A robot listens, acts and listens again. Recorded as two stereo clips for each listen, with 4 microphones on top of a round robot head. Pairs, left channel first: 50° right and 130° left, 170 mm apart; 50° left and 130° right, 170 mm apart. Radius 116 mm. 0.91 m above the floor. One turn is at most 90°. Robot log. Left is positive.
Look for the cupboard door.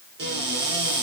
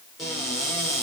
note: The cupboard door: 140° left.
cmd yaw +90
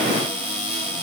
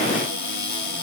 note: The cupboard door is now 45° left.
cmd yaw +45
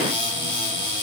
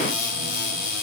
note: The cupboard door is now 15° left.
cmd yaw +15
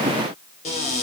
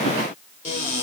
end: Found it: a cupboard door, straight ahead.